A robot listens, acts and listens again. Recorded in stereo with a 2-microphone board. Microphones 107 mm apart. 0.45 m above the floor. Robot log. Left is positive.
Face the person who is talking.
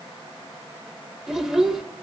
cmd yaw -30
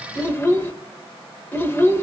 note: So it is at 25° left.
cmd yaw +25
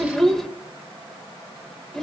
end: Found it: a child speaking, straight ahead, under 1 m away.